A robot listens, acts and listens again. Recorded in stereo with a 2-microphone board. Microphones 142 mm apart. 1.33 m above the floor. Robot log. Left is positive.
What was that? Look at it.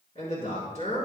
note: The man speaking: about 60° left or 120° left.
cmd yaw +60
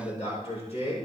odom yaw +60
note: So it is at 50° left.
cmd yaw +50
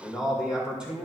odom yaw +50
note: The man speaking is now 10° right.
cmd yaw -10
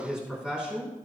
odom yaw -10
note: The man speaking is now 10° right.
cmd yaw -10
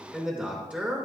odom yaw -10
note: The man speaking is now 10° right.
cmd yaw -10
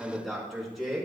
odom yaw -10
end: Found it: a man speaking, straight ahead, over 4 m away.